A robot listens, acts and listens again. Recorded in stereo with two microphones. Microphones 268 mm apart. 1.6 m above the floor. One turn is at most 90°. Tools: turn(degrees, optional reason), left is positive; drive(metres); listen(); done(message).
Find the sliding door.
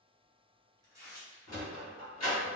turn(degrees=70, reason="The sliding door: about 70° left or 110° left.")
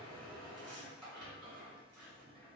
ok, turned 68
done("Found it: a sliding door, straight ahead.")